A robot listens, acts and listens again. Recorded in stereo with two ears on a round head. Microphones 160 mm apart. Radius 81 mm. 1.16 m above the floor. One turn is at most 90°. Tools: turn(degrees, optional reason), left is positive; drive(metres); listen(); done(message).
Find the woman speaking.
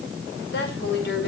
turn(degrees=70, reason="The woman speaking: about 70° left or 110° left.")
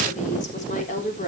turn(degrees=40, reason="So it is at 40° left.")
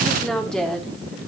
done("Facing the woman speaking.")